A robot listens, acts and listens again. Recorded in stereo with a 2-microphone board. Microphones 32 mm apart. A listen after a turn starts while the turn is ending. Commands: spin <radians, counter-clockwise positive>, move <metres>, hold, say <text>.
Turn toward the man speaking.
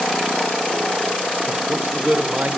spin -1.05
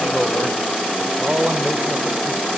spin -1.05
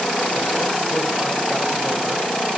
hold
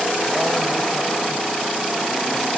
hold
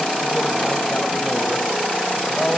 say Facing the man speaking.